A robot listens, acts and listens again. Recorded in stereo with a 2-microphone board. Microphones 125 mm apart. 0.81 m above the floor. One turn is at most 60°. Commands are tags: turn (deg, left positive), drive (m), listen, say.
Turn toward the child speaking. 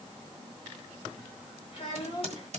<turn deg="50"/>
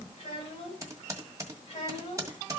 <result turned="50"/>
<turn deg="60"/>
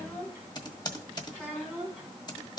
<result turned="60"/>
<turn deg="10"/>
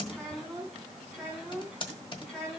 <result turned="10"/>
<say>Found it: a child speaking, straight ahead.</say>